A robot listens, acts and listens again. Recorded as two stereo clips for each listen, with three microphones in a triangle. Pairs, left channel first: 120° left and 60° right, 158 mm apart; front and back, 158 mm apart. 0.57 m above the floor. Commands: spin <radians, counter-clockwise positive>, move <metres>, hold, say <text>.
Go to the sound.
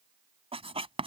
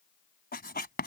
move 1.0
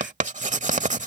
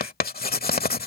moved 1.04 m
spin -0.35
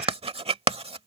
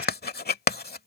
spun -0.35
move 1.0
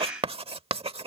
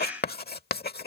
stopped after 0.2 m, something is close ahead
say Arrived at the writing, straight ahead.